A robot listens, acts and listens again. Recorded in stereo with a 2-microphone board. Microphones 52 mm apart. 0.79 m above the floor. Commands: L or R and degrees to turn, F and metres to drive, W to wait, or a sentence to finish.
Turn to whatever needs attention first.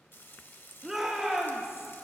R30
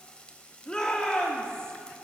L20
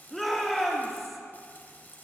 Facing the shout, 2 to 4 m away.